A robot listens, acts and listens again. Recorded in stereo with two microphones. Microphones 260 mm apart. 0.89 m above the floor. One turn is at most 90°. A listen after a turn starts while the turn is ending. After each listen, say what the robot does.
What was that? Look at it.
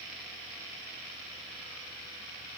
Keep listening.
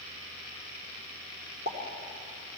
Turn 35° right.
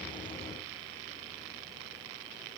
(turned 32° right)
Keep listening.
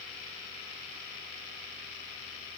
I heard a pop, but can't make it out now. It was about 5° right or 110° right.